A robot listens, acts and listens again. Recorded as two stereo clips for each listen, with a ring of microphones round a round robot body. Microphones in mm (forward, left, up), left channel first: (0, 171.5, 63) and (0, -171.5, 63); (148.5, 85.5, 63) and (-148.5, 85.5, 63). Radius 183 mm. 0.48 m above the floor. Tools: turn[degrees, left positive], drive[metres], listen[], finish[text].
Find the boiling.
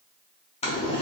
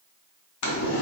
Thought: The boiling: 20° left.
Action: turn[20]
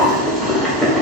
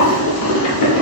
Action: finish[Found it: boiling, straight ahead, 1 to 2 m away.]